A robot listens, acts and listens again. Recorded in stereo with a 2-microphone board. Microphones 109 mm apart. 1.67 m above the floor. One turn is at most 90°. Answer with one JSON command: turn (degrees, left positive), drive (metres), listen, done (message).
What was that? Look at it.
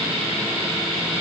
{"listen": true}
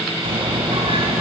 {"turn": -55}
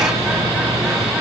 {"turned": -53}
{"done": "Found it: a bird, straight ahead."}